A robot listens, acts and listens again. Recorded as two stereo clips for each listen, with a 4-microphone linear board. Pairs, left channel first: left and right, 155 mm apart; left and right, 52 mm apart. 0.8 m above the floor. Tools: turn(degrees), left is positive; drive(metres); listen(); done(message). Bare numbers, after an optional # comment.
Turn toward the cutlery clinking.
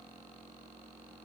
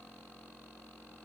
listen()
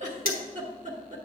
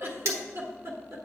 # The cutlery clinking: about 70° right or 110° right.
turn(-70)
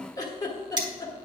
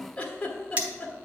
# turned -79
# So it is at 30° right.
turn(-30)
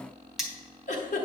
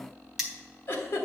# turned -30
done("Found it: cutlery clinking, straight ahead.")